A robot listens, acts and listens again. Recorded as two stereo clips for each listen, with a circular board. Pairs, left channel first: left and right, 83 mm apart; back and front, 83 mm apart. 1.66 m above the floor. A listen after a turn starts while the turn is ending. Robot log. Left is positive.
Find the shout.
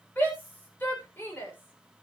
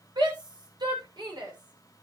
note: The shout: 25° left.
cmd yaw +25
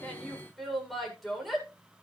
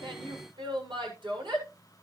end: Facing the shout.